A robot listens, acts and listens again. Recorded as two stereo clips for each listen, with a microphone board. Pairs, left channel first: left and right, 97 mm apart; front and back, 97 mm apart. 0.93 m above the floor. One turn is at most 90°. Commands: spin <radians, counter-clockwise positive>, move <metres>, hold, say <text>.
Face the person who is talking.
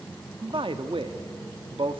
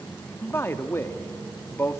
spin -1.13
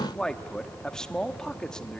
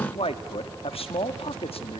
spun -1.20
say Facing the man speaking.